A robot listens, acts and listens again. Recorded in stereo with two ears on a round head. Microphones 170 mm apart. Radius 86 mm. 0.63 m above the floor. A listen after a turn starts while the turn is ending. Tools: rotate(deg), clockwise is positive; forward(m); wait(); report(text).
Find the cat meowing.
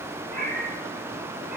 rotate(50)
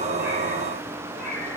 report("Found it: a cat meowing, straight ahead.")